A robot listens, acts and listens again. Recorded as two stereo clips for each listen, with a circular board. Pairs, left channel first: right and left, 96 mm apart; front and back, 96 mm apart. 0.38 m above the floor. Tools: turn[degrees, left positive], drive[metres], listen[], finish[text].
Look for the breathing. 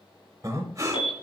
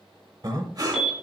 Thought: The breathing: 140° left.
Action: turn[140]
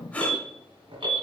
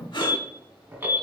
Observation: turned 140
Thought: The breathing is now 15° right.
Action: turn[-15]
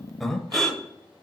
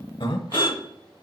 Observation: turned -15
Action: finish[Found it: breathing, straight ahead, under 1 m away.]